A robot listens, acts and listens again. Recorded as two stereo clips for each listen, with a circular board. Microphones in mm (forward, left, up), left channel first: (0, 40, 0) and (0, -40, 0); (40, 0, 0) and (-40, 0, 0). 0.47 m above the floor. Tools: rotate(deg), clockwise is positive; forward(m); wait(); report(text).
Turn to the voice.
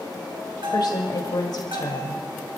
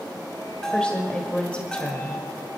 rotate(-75)
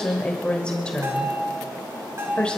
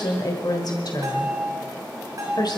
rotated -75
rotate(-15)
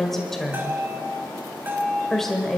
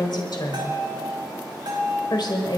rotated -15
report("Found it: a woman speaking, straight ahead, 1 to 2 m away.")